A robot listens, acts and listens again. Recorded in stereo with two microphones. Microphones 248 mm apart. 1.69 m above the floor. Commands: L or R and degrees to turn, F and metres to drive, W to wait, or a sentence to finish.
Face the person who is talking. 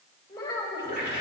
L15
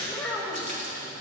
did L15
Facing the child speaking, over 4 m away.